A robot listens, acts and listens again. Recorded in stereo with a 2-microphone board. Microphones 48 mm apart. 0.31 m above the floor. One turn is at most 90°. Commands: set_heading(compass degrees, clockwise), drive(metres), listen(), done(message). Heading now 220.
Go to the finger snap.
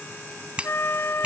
set_heading(245)
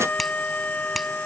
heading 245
listen()
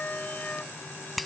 drive(1.0)
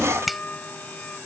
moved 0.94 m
drive(1.0)
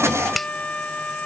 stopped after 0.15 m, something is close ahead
done("Arrived at the finger snap, straight ahead.")